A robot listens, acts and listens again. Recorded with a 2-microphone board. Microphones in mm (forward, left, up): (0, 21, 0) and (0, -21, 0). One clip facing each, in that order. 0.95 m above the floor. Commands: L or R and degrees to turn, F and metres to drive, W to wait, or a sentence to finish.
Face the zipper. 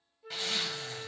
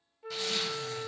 L30
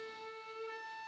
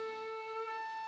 W
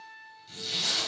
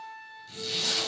Found it: a zipper, straight ahead.